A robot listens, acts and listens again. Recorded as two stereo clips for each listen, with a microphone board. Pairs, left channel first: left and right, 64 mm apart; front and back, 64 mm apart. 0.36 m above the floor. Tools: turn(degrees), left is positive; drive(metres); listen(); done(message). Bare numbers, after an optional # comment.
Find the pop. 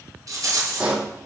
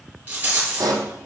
# The pop: 165° right.
turn(-165)
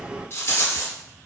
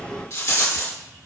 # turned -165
done("Facing where the pop came from. I can't hear it now.")